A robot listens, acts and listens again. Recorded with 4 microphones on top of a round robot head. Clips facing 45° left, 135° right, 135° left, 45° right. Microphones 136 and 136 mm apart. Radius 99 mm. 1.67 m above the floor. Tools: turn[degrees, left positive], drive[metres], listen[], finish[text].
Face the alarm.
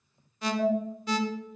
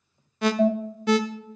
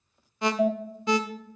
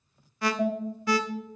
Thought: The alarm: 160° right.
Action: turn[-160]
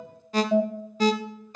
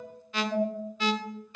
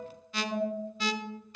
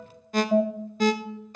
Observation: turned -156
Action: finish[Found it: an alarm, straight ahead.]